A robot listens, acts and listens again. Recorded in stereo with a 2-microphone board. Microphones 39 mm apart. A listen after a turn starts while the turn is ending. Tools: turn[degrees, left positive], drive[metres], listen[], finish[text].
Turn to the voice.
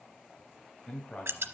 Thought: The man speaking: about 25° left or 155° left.
Action: turn[25]
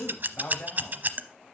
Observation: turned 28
Thought: So it is at 120° left.
Action: turn[120]
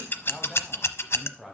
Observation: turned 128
Action: finish[Facing the man speaking, 2 to 4 m away.]